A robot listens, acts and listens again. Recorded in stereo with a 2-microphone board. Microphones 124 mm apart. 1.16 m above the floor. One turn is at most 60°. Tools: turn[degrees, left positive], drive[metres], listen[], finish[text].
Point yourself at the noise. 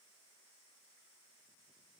Action: listen[]
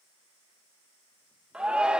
Action: turn[-30]
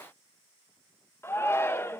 Thought: So it is at 20° left.
Action: turn[20]
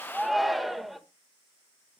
Action: finish[Found it: a shout, straight ahead, 1 to 2 m away.]